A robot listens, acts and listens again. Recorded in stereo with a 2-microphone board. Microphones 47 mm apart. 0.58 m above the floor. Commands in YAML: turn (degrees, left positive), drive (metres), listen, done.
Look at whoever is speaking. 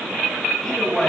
turn: 30
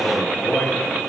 turn: 145
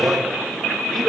done: "Facing the man speaking."